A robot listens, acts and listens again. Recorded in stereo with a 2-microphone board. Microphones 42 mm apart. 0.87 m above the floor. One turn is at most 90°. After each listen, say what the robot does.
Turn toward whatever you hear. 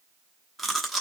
Turn 30° left.
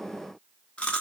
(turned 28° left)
Turn 90° left.
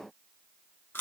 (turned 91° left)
Turn 60° left.
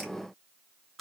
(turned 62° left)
Keep listening.
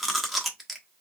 Found it: chewing, straight ahead.